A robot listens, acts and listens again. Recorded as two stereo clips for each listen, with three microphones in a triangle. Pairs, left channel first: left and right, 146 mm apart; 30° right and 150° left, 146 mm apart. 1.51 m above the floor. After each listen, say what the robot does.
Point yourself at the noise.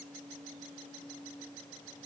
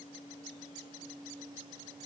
Keep listening.
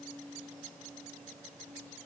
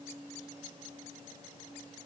Keep listening.
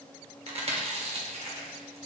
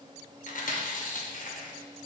Turn 50° right.
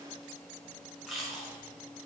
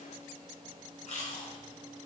Found it: chewing, straight ahead, under 1 m away.